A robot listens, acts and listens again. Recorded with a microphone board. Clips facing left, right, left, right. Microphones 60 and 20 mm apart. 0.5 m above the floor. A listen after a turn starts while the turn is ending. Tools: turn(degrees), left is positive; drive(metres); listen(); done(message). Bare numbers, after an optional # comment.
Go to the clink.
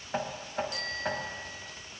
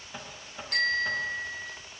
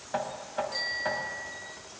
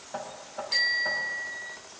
listen()
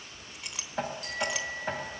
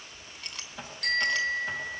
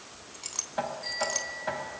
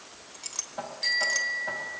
turn(30)
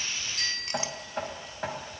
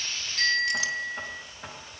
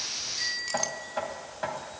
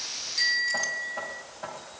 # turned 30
listen()
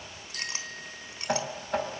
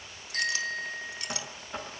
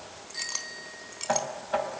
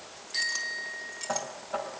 listen()
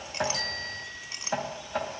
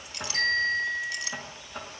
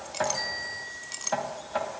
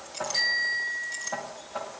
# So it is at 145° left.
turn(145)
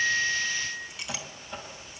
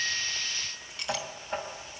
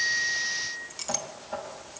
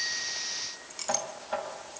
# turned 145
drive(1.0)
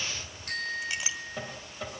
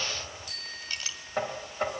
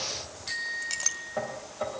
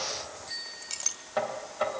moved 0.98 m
# The clink is now 15° left.
turn(15)
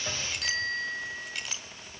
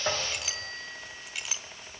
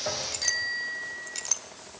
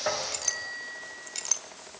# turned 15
drive(1.0)
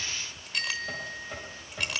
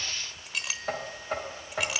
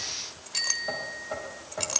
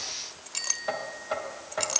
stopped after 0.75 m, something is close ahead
done("I am next to the clink.")